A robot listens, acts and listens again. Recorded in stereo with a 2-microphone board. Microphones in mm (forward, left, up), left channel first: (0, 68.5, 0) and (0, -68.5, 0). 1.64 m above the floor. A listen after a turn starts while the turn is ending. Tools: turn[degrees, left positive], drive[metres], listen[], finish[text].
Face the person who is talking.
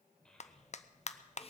Action: turn[30]
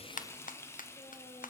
Action: listen[]
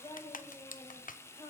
Thought: So it is at 145° left.
Action: turn[145]
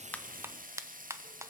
Action: listen[]
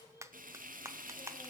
Thought: The child speaking is now 30° left.
Action: turn[30]
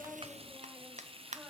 Action: listen[]
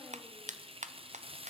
Action: listen[]
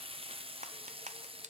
Action: finish[I heard a child speaking from this way, but can't make it out now.]